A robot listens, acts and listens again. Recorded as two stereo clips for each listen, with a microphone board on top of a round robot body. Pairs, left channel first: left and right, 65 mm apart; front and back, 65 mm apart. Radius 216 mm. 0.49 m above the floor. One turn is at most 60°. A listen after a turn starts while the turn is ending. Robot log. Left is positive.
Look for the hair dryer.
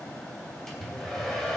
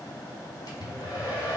end: Found it: a hair dryer, straight ahead, 2 to 4 m away.